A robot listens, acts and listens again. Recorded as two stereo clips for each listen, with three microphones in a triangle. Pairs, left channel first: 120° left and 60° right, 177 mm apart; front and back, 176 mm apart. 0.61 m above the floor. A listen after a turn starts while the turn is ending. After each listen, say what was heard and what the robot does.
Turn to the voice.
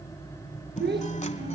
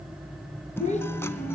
The child speaking: 50° right. Turn 50° right.
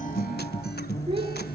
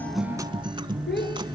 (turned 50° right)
Facing the child speaking, over 4 m away.